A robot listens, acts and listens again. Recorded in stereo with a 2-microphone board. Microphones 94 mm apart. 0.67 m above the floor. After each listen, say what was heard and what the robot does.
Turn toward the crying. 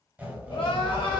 Turn 90° left.
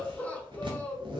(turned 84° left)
So it is at 15° left. Turn 15° left.
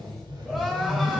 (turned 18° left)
Found it: crying, straight ahead, under 1 m away.